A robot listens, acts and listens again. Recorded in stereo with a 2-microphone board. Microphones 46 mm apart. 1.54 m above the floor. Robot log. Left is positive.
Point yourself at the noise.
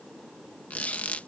note: The squeak: about 35° left or 145° left.
cmd yaw +35
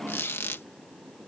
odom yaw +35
note: So it is at 105° left.
cmd yaw +105
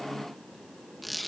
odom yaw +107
end: Facing the squeak.